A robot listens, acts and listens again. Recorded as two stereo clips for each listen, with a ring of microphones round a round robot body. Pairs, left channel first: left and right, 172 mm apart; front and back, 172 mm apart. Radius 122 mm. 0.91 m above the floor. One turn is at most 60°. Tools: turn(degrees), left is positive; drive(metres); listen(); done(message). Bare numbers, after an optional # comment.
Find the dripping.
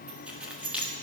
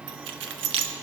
listen()
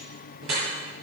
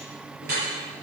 # The dripping: 125° right.
turn(-60)
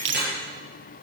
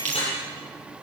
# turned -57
# The dripping is now 70° right.
turn(-60)
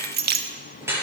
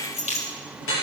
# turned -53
# The dripping is now 15° right.
turn(-15)
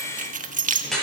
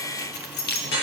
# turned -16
done("Found it: dripping, straight ahead, over 4 m away.")